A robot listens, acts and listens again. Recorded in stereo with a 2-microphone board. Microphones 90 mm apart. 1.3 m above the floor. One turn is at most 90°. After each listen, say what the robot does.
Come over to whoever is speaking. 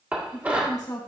Turn 45° left.
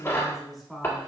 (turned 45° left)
Drive 1.0 m forward.
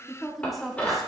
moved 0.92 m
Drive 1.0 m forward.
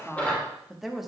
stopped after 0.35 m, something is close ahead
Arrived at the woman speaking, straight ahead.